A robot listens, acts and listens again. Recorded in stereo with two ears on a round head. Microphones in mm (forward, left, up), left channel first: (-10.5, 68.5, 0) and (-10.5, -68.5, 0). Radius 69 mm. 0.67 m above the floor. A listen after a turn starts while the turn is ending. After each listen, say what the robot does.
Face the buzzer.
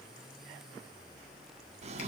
Keep listening.
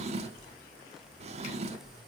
Keep listening.
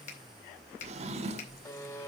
Turn 25° left.
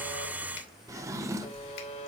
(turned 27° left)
Turn 130° left.
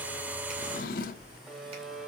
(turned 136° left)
Found it: a buzzer, straight ahead.